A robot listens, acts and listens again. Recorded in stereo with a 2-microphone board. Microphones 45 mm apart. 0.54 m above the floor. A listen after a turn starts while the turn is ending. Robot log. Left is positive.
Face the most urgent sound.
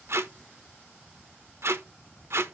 cmd idle
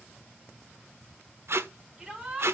note: The shout: about 15° right or 165° right.
cmd yaw -15
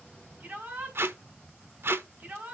note: So it is at 145° right.
cmd yaw -145
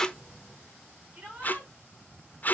note: The shout is now 35° right.
cmd yaw -35
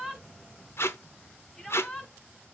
note: The shout is now 15° left.
cmd yaw +15
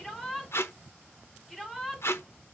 end: Found it: a shout, straight ahead, over 4 m away.